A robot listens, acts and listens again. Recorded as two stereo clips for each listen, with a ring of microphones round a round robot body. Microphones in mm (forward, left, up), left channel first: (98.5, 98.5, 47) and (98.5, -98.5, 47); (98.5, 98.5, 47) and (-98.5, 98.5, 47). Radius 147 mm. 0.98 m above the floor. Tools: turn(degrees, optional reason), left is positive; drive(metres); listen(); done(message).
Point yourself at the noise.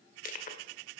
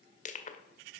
turn(degrees=50, reason="The crushing: 50° left.")
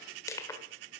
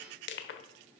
turn(degrees=15, reason="The crushing is now 15° left.")
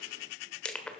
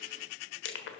done("Found it: crushing, straight ahead.")